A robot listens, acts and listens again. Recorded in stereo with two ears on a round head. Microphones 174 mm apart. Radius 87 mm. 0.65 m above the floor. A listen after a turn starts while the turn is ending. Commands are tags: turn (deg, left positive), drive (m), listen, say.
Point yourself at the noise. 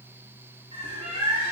<turn deg="-25"/>
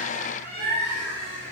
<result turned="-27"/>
<turn deg="-125"/>
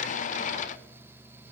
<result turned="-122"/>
<listen/>
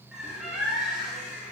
<say>Facing the bird.</say>